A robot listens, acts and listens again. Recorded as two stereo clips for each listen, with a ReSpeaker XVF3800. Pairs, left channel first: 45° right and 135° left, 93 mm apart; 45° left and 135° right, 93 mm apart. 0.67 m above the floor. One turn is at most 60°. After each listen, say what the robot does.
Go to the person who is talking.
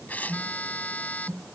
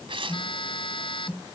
Keep listening.
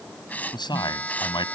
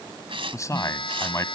Turn 10° right.
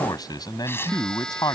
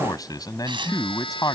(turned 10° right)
Drive 1.0 m forward.
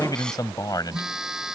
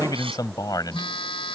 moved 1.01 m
Drive 1.0 m forward.
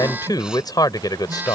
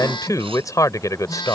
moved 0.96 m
Drive 1.0 m forward.
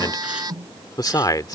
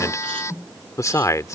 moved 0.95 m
Drive 1.0 m forward.
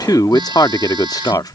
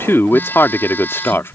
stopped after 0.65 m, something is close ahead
Turn 15° right.
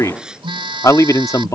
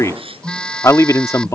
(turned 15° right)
Arrived at the man speaking, straight ahead.